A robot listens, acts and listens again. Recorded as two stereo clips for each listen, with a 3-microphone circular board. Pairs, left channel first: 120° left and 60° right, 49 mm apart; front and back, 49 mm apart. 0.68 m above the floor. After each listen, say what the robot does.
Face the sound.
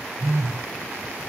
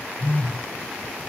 Turn 40° right.
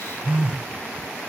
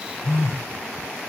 Found it: a phone buzzing, straight ahead.